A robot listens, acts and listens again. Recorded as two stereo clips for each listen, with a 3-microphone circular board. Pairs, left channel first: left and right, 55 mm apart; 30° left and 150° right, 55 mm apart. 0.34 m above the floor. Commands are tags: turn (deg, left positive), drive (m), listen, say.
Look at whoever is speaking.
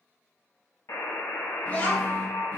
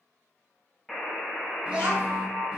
<turn deg="140"/>
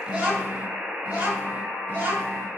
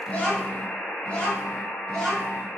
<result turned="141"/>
<turn deg="-50"/>
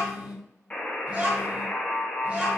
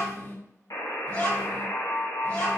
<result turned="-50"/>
<turn deg="-20"/>
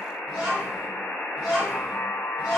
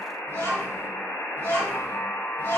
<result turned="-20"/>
<say>Facing the child speaking.</say>